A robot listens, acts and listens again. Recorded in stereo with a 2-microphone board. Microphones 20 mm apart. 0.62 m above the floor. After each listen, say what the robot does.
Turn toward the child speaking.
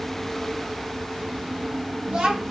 Turn 90° right.
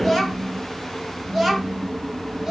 Turn 25° right.
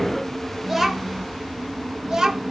Turn 35° right.
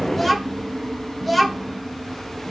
Facing the child speaking.